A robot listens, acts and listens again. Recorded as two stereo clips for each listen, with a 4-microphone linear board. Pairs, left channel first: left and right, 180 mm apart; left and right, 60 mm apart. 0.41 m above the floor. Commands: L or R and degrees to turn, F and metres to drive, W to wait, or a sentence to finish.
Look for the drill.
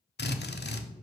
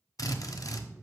L70
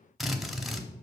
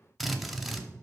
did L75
Found it: a drill, straight ahead, under 1 m away.